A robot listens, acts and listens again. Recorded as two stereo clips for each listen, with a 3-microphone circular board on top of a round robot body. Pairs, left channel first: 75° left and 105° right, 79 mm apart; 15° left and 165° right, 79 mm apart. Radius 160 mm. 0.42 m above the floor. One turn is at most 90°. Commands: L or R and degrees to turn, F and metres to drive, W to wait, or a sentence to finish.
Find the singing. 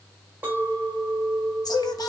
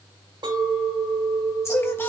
L65
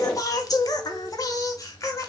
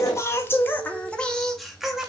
L90
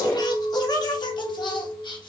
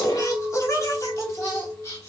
L75
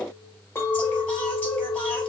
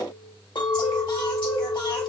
W
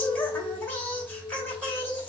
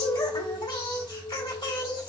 Facing the singing.